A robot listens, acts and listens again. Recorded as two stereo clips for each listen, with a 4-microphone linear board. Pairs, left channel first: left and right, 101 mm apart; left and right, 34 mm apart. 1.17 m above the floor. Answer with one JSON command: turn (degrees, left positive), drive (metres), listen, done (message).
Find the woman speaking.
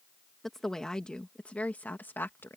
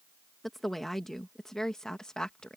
{"turn": 20}
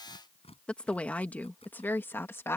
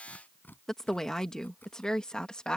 {"turn": 25}
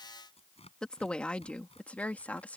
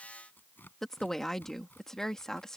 {"turn": 30}
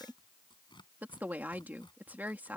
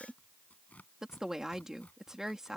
{"turn": -15}
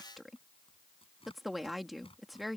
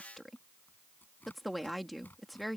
{"done": "Found it: a woman speaking, straight ahead."}